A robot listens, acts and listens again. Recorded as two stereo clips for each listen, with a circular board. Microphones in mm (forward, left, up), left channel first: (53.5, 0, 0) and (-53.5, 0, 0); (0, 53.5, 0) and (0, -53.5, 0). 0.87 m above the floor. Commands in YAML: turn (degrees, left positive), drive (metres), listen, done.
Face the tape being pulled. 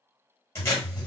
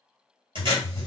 turn: -60
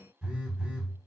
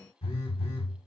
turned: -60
listen: true
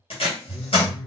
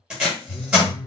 done: "Found it: tape being pulled, straight ahead, 1 to 2 m away."